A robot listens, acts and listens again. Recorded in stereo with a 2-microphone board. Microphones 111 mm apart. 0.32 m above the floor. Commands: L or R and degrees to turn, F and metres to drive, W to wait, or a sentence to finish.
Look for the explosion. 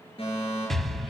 L30
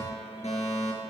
W
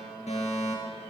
I heard an explosion, but can't make it out now. It was about 30° right or 150° left.